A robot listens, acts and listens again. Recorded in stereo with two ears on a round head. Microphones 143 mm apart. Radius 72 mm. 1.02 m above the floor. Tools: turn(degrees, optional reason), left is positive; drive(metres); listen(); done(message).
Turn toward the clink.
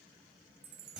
listen()
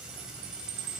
listen()
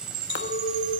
turn(degrees=90)
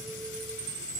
listen()
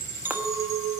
turn(degrees=-15, reason="The clink is now 15° right.")
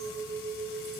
done("Facing the clink, 1 to 2 m away.")